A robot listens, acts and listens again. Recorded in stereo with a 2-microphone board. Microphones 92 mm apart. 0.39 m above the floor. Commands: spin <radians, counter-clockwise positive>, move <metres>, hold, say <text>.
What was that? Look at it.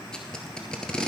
spin 0.52
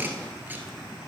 spin -0.35
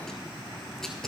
say Found it: tape being pulled, straight ahead, 1 to 2 m away.